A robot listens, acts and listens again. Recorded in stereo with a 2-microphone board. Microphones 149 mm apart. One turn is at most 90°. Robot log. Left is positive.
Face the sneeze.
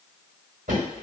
cmd idle
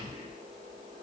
cmd idle
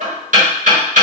end: I can't make out a sneeze, only knocking.